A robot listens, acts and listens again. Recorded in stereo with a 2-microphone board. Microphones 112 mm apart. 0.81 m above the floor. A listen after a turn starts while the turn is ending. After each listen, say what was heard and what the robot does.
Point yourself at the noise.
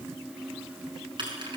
The keys jangling: about 45° right or 135° right. Turn 45° right.
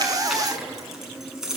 Facing the keys jangling, over 4 m away.